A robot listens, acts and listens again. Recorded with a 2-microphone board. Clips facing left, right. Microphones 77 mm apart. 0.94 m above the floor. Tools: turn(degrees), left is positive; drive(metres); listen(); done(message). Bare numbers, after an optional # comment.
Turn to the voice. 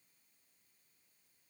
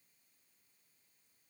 listen()
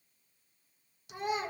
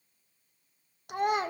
# The child speaking: about 55° right or 125° right.
turn(-55)
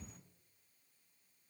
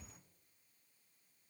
listen()
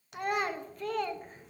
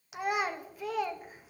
done("Found it: a child speaking, straight ahead, under 1 m away.")